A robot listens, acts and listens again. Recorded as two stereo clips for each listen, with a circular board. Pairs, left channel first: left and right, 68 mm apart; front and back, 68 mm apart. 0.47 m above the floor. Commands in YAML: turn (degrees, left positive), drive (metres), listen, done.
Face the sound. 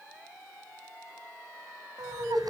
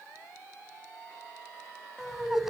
turn: -95
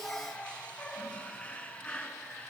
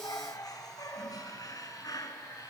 turn: 20
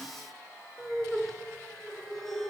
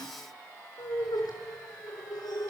done: "Found it: laughter, straight ahead, over 4 m away."